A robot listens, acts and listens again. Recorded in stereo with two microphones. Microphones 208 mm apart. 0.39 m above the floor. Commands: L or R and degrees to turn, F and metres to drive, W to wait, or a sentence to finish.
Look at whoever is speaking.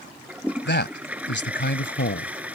L60
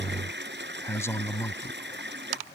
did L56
L15
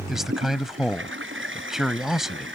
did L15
Facing the man speaking.